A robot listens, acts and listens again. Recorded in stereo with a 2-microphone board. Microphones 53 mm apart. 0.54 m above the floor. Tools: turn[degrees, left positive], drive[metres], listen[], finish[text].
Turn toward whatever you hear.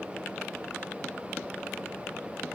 Action: listen[]
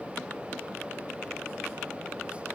Action: listen[]
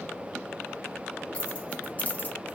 Thought: The keys jangling: about 30° left or 150° left.
Action: turn[30]
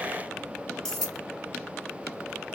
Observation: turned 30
Thought: So it is at 10° left.
Action: turn[10]
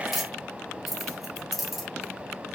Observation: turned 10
Action: finish[Found it: keys jangling, straight ahead.]